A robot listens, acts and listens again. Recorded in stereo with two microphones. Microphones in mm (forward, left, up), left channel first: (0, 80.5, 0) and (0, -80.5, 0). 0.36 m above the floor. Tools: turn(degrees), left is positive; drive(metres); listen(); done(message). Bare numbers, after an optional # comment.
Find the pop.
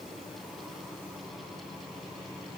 listen()
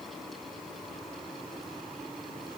listen()
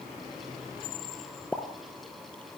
turn(30)
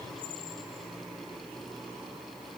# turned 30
listen()
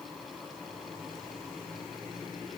done("I heard a pop, but can't make it out now. It was about 20° right or 140° left.")